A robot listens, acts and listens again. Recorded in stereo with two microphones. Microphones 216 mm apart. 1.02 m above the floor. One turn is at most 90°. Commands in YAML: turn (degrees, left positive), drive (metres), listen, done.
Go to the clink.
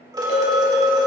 turn: 40
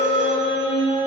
listen: true
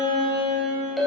drive: 1.0
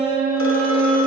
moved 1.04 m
listen: true
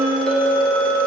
drive: 1.0
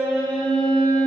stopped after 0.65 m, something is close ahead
listen: true
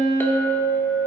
turn: 10
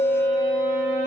done: "Arrived at the clink, straight ahead."